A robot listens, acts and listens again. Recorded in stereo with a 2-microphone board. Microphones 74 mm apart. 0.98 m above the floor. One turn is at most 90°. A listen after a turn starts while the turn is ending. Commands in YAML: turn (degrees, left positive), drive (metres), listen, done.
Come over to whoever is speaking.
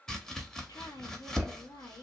turn: 60
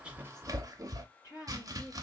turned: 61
turn: 55
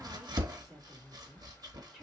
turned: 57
drive: 1.0
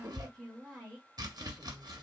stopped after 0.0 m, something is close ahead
done: "Blocked. The woman speaking is further on, straight ahead."